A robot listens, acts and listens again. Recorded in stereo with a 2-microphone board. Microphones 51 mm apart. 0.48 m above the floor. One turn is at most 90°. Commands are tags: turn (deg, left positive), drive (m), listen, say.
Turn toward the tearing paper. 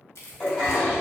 <turn deg="70"/>
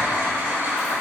<listen/>
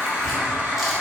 <say>Found it: tearing paper, straight ahead, under 1 m away.</say>